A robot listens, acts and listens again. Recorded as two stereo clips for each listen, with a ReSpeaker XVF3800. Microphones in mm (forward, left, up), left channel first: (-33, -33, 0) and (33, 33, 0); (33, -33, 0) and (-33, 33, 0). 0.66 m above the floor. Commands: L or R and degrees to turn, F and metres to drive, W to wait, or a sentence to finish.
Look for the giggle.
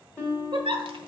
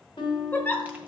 L25
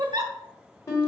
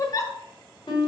Found it: a giggle, straight ahead.